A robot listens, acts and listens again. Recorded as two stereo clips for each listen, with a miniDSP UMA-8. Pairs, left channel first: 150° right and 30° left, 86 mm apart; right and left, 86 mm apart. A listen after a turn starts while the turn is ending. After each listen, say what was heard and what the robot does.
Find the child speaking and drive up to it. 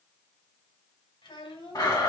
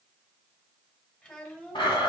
The child speaking: 165° right. Turn 165° right.
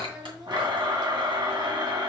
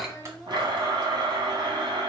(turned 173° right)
Nothing new. It was at 10° left. Turn 10° left.
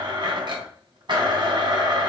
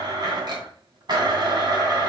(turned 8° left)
Keep listening.
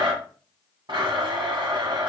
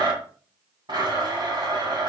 Facing where the child speaking came from. I can't hear it now. I did not reach it.